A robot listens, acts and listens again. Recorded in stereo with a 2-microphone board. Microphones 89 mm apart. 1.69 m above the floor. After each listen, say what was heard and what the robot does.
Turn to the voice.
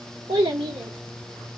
Turn 90° right.
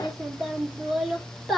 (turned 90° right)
Facing the child speaking.